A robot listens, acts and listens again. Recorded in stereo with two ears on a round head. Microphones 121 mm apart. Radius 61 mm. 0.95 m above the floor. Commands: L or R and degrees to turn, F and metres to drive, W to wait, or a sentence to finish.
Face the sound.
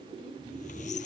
L55
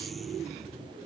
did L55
Facing the squeak.